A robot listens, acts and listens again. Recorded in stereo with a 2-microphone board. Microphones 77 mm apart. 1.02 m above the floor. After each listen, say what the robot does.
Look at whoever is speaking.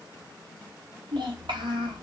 Turn 90° right.
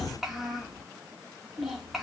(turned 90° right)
Found it: a child speaking, straight ahead.